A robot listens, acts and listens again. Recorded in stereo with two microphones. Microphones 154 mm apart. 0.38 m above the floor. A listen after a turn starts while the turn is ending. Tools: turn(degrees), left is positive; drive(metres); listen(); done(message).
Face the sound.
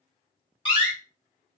turn(degrees=30)
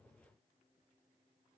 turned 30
listen()
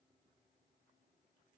done("I heard a door slam, but can't make it out now. It was about straight ahead or 120° left.")